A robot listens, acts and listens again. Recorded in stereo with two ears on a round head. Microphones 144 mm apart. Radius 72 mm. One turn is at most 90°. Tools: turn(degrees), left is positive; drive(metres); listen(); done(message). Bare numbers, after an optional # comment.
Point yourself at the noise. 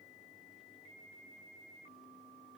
listen()
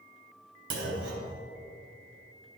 turn(-90)
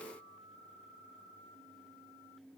done("I heard a clunk from this way, but can't make it out now.")